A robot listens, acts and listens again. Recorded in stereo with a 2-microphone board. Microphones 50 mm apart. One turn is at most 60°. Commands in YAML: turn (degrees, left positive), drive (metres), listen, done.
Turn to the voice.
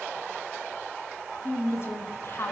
turn: 50
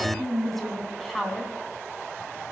done: "Found it: a woman speaking, straight ahead, 2 to 4 m away."